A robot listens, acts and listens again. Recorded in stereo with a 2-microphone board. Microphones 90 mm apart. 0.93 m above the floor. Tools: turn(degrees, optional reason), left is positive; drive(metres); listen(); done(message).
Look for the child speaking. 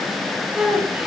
turn(degrees=-30)
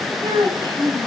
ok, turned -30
turn(degrees=-130, reason="So it is at 130° right.")
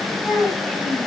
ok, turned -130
done("Found it: a child speaking, straight ahead.")